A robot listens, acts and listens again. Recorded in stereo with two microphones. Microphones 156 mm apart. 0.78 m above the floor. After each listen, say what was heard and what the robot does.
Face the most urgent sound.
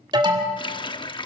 The alarm: about 30° right or 150° right. Turn 30° right.
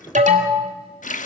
So it is at 120° right. Turn 120° right.
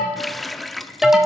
Found it: an alarm, straight ahead.